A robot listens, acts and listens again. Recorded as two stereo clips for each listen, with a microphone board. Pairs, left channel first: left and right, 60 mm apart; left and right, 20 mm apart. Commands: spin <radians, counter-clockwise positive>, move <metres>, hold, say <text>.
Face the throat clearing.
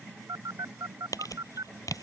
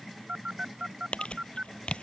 hold
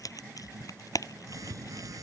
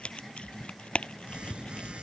hold
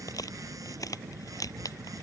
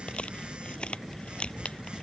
say I can't make out throat clearing, only a phone buzzing and crumpling.